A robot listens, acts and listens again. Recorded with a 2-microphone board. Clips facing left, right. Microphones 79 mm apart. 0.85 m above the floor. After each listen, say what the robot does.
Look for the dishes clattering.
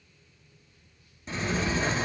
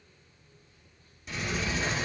Keep listening.
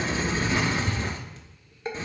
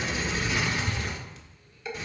Turn 35° left.
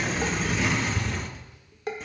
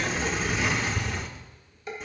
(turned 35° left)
Turn 110° left.
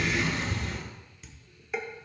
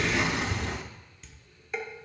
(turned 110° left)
Found it: dishes clattering, straight ahead, 1 to 2 m away.